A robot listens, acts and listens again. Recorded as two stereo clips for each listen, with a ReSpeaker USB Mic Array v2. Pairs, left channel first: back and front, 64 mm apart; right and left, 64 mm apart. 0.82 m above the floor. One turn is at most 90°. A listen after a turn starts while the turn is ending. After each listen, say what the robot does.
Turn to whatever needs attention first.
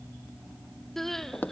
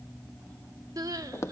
Turn 90° left.
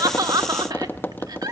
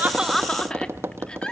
Turn 15° right.
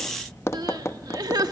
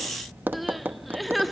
Found it: crying, straight ahead.